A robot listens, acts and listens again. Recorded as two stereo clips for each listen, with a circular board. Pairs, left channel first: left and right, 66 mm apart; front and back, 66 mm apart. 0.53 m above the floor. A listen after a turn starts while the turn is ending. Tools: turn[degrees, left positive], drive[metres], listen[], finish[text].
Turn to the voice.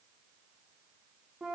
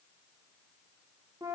Action: listen[]
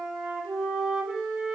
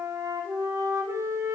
Action: listen[]
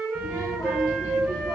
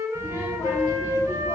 Thought: The child speaking: 45° left.
Action: turn[45]
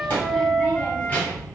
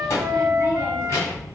Thought: The child speaking is now 25° left.
Action: turn[25]
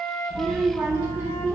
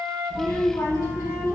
Thought: The child speaking is now 15° right.
Action: turn[-15]
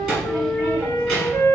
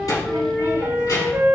Action: finish[Found it: a child speaking, straight ahead, 2 to 4 m away.]